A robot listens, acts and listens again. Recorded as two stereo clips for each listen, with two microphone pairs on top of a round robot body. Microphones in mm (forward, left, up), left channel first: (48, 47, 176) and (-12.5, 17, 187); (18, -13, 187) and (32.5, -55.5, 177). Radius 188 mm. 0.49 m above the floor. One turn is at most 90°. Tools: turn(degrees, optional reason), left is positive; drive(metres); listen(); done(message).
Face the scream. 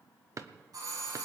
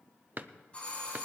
listen()
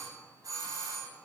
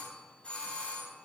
listen()
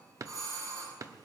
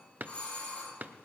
done("I can't make out a scream to turn to.")